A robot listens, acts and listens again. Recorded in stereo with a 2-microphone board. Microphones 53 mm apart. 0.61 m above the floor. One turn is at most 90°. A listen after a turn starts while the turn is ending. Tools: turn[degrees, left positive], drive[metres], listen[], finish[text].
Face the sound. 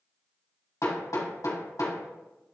Thought: The hammering: about 70° left or 110° left.
Action: turn[70]
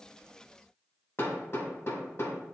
Thought: So it is at 40° left.
Action: turn[40]
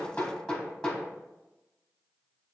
Thought: The hammering is now 10° left.
Action: turn[10]
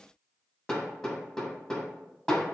Action: finish[Facing the hammering, 1 to 2 m away.]